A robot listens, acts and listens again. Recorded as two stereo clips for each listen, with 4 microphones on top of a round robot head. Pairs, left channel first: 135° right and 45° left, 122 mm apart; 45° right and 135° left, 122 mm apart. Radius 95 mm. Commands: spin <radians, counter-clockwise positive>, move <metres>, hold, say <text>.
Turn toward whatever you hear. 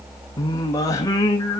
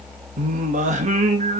spin 2.88
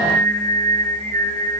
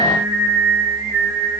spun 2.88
spin 1.13
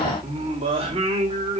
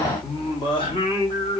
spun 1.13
say Facing the singing.